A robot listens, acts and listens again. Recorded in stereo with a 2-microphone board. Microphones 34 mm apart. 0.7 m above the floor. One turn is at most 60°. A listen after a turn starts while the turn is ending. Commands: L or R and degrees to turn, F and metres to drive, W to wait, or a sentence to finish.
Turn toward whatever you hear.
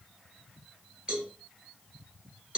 R30
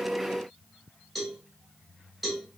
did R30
Facing the cowbell, 1 to 2 m away.